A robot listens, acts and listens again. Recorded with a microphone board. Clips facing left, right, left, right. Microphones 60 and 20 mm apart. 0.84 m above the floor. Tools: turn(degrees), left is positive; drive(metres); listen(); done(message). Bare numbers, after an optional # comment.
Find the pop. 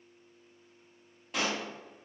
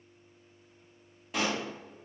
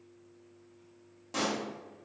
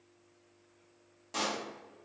turn(30)
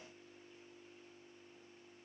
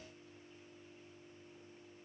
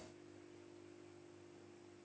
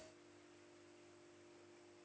listen()
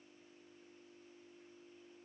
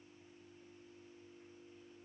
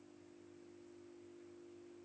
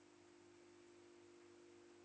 done("I heard a pop, but can't make it out now. It was about 30° right or 150° left.")